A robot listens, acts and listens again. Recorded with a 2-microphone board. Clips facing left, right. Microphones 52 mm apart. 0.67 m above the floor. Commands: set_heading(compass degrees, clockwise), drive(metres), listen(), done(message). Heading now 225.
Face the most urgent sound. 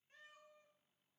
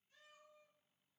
listen()
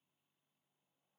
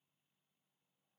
listen()
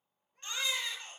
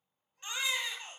set_heading(245)
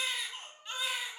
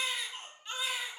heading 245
done("Facing the baby crying.")